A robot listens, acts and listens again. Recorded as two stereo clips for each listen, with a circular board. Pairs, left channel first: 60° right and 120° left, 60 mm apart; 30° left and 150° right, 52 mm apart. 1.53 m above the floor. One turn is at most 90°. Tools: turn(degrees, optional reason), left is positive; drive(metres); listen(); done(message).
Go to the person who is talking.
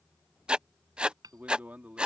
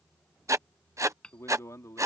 turn(degrees=55, reason="The man speaking: 55° left.")
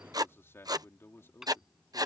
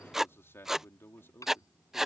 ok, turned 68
turn(degrees=-10, reason="The man speaking is now 10° right.")
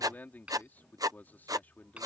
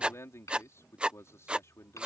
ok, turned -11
drive(metres=1.0)
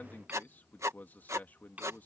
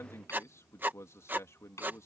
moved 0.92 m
drive(metres=1.0)
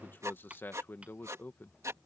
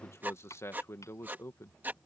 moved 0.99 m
drive(metres=1.0)
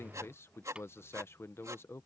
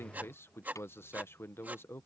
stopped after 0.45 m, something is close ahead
turn(degrees=-10, reason="The man speaking is now 10° right.")
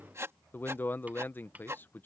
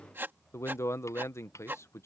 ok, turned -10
done("Arrived at the man speaking, straight ahead.")